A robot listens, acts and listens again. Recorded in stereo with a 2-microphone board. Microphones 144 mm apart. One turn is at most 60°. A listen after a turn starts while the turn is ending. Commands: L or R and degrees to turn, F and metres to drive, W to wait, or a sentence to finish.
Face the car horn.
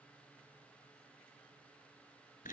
W
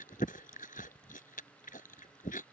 W
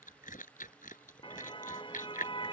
L35
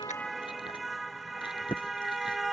Found it: a car horn, straight ahead.